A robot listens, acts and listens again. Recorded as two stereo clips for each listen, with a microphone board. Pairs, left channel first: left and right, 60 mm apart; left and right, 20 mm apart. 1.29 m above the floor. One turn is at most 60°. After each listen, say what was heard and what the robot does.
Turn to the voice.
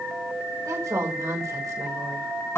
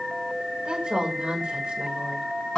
The woman speaking: about 60° right or 120° right. Turn 60° right.
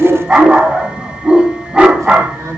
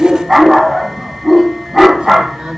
Keep listening.
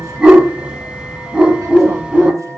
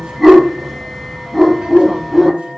Keep listening.
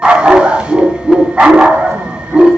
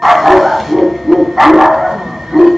I heard a woman speaking, but can't make it out now. It was about straight ahead or 60° right.